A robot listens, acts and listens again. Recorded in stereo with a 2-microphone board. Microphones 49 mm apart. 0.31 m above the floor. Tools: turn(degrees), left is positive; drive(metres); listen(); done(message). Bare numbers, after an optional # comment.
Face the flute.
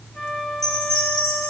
turn(30)
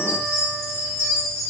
listen()
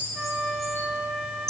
# So it is at 25° right.
turn(-25)
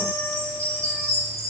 listen()
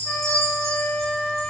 # The flute is now 10° left.
turn(10)
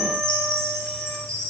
listen()
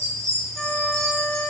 done("Facing the flute.")